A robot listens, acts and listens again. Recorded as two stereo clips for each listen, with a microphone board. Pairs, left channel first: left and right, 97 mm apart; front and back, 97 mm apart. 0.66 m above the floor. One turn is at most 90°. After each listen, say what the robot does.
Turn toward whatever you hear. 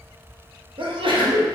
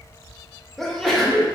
Turn 85° right.
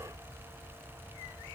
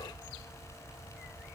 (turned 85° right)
Facing where the sneeze came from. I can't hear it now.